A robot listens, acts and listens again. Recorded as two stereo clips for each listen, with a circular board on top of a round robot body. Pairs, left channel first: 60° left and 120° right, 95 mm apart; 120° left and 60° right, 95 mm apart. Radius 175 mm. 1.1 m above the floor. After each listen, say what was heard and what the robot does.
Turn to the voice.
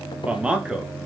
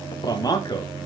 The man speaking: 160° left. Turn 160° left.
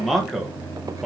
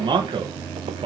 The man speaking is now 35° right. Turn 35° right.
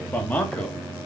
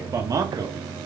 The man speaking is now 10° right. Turn 10° right.
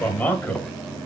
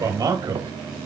The man speaking is now 10° right. Turn 10° right.
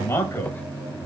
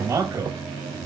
Found it: a man speaking, straight ahead, 2 to 4 m away.